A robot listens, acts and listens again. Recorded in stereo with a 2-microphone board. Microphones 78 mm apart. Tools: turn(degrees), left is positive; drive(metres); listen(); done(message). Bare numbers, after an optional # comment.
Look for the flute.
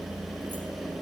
listen()
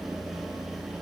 listen()
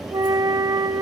# The flute: about 50° right or 130° right.
turn(-50)
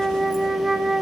done("Facing the flute, under 1 m away.")